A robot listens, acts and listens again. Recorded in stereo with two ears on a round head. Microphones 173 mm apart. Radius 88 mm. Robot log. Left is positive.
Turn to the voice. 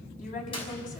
note: The woman speaking: about 45° left or 135° left.
cmd yaw +45
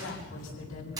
note: So it is at 90° left.
cmd yaw +90
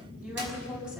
end: Facing the woman speaking.